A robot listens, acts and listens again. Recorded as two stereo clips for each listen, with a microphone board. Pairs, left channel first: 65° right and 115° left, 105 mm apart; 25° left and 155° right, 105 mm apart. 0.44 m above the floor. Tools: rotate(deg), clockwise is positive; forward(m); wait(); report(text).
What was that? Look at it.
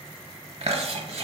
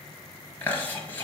rotate(-95)
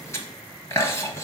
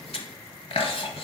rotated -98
report("Found it: chewing, straight ahead.")